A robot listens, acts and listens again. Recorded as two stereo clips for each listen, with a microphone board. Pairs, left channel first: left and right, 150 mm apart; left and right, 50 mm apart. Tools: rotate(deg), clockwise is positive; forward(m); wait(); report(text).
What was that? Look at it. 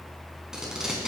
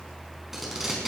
rotate(30)
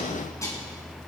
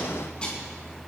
rotate(-20)
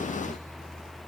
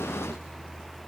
wait()
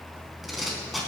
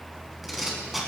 report("Facing the tape being pulled.")